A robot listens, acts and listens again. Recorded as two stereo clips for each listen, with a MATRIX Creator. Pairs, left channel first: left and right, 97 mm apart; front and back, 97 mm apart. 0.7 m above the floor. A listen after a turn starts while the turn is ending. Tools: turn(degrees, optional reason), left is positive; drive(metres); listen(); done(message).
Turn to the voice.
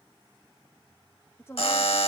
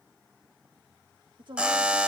turn(degrees=150, reason="The woman speaking: 150° left.")
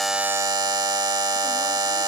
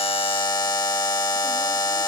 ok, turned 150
listen()
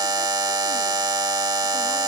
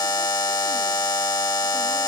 listen()
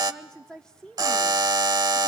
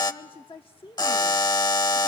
turn(degrees=10, reason="The woman speaking is now 10° left.")
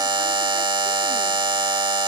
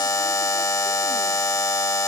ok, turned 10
listen()
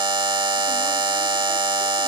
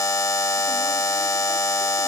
listen()
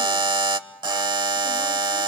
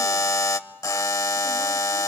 done("I heard a woman speaking from this way, but can't make it out now.")